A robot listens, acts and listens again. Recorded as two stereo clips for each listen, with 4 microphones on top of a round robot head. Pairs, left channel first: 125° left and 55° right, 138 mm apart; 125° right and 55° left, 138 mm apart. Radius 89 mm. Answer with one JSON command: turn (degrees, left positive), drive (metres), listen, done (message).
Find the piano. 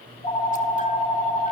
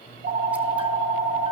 {"listen": true}
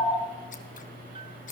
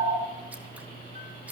{"listen": true}
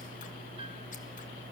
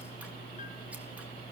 {"done": "I can't make out a piano to turn to."}